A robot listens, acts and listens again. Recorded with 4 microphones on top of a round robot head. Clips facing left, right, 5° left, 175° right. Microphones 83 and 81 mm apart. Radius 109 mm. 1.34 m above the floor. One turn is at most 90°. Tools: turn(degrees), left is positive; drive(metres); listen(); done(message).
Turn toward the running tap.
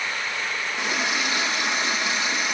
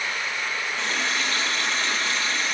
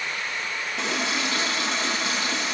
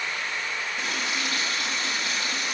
turn(degrees=15)
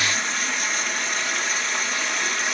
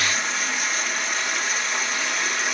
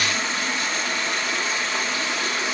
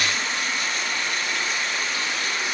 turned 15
done("Found it: a running tap, straight ahead, 1 to 2 m away.")